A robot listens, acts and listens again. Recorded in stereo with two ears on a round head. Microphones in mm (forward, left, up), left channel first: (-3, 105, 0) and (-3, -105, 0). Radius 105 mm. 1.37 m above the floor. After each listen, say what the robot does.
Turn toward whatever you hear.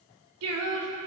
Turn 75° right.
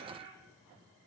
Keep listening.
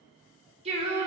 Turn 25° right.
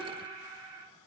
Turn 20° right.
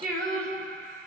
Facing the singing, 2 to 4 m away.